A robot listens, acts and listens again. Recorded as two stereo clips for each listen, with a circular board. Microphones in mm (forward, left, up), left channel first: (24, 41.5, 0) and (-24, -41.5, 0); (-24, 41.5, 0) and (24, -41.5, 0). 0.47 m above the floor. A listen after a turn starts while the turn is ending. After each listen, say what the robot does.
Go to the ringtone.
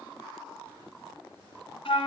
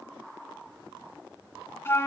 Keep listening.
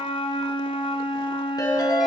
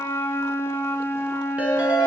Turn 15° left.
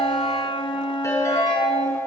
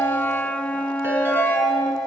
Drive 1.0 m forward.
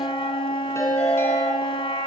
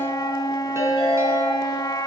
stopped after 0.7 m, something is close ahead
Something is in my way. I am facing the ringtone but have not reached it.